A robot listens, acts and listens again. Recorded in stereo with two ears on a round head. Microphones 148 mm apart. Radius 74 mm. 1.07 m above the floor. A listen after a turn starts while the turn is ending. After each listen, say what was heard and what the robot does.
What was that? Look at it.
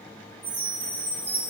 Turn 30° right.
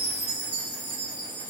So it is at 135° right. Turn 135° right.
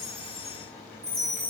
The chime is now 20° right. Turn 20° right.
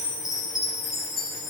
Found it: a chime, straight ahead, 2 to 4 m away.